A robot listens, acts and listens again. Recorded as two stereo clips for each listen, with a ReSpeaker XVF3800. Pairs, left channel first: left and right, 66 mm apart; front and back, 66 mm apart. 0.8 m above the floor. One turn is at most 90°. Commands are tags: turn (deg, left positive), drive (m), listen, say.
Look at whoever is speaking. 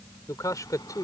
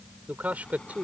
<turn deg="90"/>
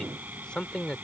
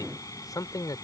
<turn deg="10"/>
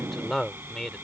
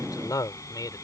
<say>Found it: a man speaking, straight ahead.</say>